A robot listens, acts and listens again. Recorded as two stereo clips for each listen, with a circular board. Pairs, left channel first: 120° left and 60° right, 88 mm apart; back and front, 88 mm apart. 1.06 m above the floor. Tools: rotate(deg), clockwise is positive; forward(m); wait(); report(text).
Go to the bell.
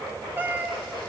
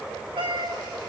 wait()
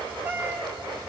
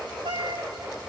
wait()
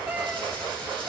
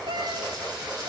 report("I can't make out a bell, only a cat meowing.")